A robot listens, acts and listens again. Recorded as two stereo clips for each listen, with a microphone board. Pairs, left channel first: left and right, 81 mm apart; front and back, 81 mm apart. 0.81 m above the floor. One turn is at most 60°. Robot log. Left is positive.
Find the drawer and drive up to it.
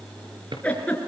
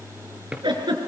note: The drawer: 100° right.
cmd yaw -60
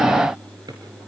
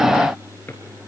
note: Nothing new. It was at 40° right.
cmd yaw -40
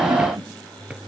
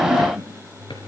cmd idle
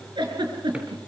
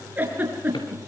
end: Facing where the drawer came from. I can't hear it now. I did not reach it.